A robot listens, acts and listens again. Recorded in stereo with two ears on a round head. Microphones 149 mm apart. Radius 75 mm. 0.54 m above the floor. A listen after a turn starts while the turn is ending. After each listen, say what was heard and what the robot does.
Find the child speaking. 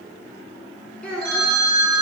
Turn 30° left.
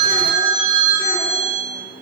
Keep listening.
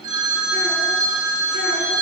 Keep listening.
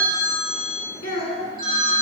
So it is at 140° left. Turn 140° left.
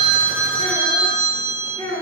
The child speaking is now 15° left. Turn 15° left.
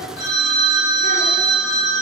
Keep listening.
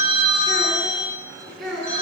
Found it: a child speaking, straight ahead, 2 to 4 m away.